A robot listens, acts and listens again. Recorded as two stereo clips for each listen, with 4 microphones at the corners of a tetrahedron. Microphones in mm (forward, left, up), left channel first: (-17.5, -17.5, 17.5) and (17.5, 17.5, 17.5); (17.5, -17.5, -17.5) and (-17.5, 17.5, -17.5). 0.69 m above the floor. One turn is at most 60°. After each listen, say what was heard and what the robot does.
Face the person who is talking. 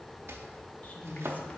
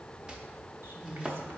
The woman speaking: 170° left. Turn 60° left.
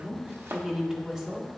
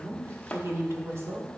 The woman speaking is now 120° left. Turn 60° left.
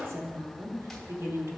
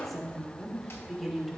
The woman speaking is now 45° left. Turn 45° left.
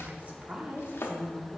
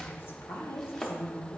The woman speaking is now 20° right. Turn 20° right.
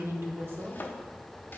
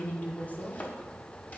Facing the woman speaking, 1 to 2 m away.